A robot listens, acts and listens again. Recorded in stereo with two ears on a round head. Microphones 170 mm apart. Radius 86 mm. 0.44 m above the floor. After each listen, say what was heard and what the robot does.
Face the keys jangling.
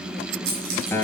The keys jangling: about 45° right or 135° right. Turn 45° right.
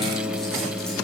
Keep listening.
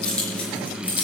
So it is at 10° left. Turn 10° left.
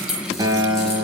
Facing the keys jangling, over 4 m away.